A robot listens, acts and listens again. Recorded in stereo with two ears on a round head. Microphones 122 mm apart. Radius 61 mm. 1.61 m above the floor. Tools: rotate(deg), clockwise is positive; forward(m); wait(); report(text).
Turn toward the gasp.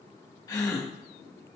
rotate(-25)
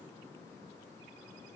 wait()
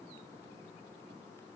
report("I heard a gasp, but can't make it out now. It was about straight ahead or 130° left.")